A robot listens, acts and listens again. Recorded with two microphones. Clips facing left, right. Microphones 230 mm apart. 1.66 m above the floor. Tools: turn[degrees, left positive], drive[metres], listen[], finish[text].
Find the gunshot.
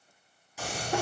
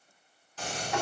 Action: turn[30]
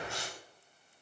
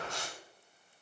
Thought: So it is at 20° right.
Action: turn[-20]
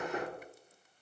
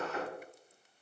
Action: finish[I heard a gunshot from this way, but can't make it out now.]